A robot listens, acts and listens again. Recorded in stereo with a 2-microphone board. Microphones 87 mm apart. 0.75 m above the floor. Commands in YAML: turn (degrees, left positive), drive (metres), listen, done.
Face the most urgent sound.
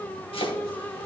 listen: true
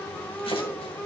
listen: true
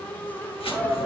turn: -30
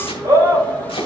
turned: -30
turn: -145
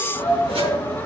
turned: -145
turn: 25
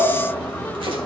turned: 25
listen: true
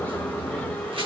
listen: true
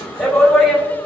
done: "Facing the shout."